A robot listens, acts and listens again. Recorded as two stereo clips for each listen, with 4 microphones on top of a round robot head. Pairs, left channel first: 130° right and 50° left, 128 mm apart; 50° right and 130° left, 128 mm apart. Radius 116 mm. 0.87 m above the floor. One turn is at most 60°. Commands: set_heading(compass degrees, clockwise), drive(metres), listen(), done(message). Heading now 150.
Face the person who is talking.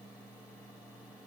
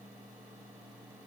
listen()
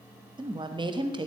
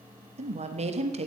set_heading(90)
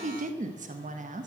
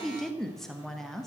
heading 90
set_heading(50)
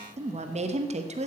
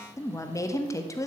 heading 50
set_heading(30)
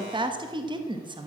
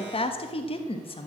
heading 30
done("Facing the woman speaking.")